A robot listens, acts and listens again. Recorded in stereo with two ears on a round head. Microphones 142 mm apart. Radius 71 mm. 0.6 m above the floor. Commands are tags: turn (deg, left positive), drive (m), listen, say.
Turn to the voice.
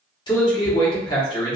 <turn deg="30"/>
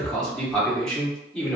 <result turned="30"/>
<say>Found it: a man speaking, straight ahead.</say>